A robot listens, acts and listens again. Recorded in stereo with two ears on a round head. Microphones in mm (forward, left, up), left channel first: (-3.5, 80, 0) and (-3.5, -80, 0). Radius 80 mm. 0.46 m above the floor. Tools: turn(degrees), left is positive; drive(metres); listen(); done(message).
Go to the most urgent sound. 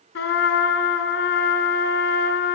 listen()
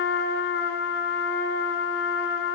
listen()
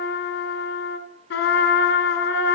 done("I can't make out anything urgent, only a trumpet.")